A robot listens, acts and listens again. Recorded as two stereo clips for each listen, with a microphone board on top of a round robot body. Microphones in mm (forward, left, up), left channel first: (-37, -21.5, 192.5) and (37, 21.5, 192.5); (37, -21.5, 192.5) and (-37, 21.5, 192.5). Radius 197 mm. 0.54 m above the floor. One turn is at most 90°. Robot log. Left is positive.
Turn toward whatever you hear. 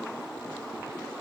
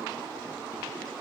cmd idle
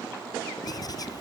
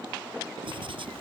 note: The writing: 165° left.
cmd yaw +90
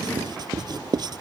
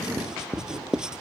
note: The writing is now 70° left.
cmd yaw +70
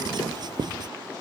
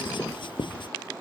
note: The writing is now 10° right.
cmd yaw -10
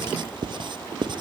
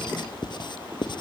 end: Found it: writing, straight ahead.